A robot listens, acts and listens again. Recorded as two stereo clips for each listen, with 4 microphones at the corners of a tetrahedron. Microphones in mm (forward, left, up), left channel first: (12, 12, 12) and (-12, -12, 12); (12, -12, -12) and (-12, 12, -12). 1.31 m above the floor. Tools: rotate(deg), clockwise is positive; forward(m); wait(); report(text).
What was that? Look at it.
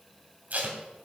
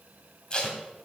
rotate(105)
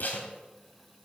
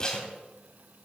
rotate(-20)
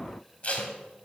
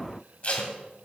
report("Facing the tape being pulled, 2 to 4 m away.")